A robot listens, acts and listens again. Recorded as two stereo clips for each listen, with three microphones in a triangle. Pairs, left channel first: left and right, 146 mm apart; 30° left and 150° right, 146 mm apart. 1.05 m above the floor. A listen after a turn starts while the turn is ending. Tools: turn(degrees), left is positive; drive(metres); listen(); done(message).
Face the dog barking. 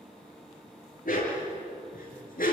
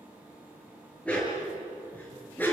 turn(degrees=105)
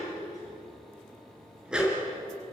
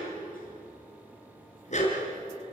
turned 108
done("Found it: a dog barking, straight ahead.")